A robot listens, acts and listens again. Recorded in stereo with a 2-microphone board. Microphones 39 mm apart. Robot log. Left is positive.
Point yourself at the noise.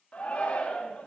note: The shout: about 40° left or 140° left.
cmd yaw +40
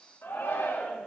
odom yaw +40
note: So it is at 100° left.
cmd yaw +100
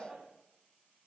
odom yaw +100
note: The shout is now 10° right.
cmd yaw -10
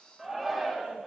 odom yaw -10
end: Facing the shout.